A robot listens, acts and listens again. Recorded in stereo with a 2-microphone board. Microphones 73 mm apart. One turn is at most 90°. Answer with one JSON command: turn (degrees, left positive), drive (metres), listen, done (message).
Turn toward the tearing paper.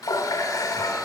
{"listen": true}
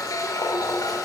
{"listen": true}
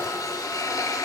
{"done": "I can't make out tearing paper to turn to."}